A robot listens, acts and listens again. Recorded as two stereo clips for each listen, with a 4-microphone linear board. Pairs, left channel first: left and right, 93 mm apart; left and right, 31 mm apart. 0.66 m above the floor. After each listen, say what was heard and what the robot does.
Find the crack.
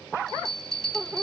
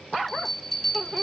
Keep listening.
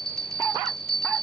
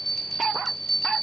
Keep listening.
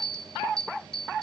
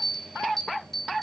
I can't make out a crack, only a bell.